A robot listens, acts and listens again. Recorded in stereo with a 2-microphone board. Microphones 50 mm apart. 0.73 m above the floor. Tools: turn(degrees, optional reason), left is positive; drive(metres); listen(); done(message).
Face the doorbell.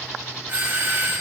turn(degrees=-45, reason="The doorbell: about 45° right or 135° right.")
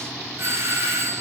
turn(degrees=-85, reason="So it is at 85° right.")
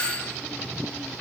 turn(degrees=25, reason="The doorbell is now 25° left.")
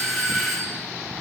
done("Facing the doorbell.")